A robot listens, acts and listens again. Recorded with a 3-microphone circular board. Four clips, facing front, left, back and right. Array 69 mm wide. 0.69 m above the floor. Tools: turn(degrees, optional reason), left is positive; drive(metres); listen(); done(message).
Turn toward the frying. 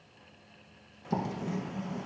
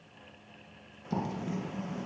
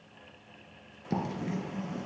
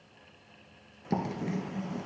listen()
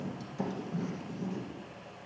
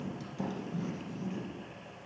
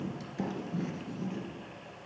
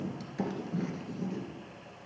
listen()
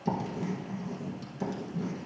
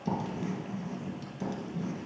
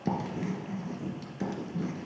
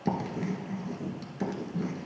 done("I can't make out frying, only writing.")